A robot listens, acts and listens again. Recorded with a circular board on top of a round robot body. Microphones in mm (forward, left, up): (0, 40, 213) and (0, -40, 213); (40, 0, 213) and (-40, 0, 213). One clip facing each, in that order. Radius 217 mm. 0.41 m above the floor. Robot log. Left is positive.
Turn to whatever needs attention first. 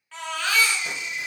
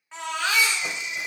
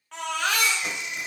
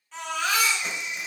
note: The baby crying: 20° right.
cmd yaw -20
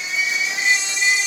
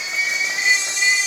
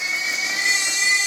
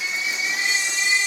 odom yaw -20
end: Facing the baby crying, 1 to 2 m away.